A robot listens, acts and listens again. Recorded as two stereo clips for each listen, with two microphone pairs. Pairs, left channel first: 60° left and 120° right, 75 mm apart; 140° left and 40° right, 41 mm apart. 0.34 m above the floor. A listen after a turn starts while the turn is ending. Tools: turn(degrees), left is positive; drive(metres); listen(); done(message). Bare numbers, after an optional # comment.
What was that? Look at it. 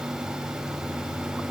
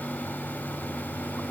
listen()
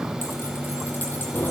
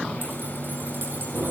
done("Found it: keys jangling, straight ahead, over 4 m away.")